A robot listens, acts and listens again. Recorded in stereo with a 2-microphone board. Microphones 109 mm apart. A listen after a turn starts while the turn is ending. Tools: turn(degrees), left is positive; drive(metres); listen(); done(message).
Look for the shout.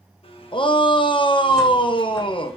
turn(degrees=50)
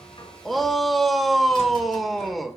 done("Facing the shout, under 1 m away.")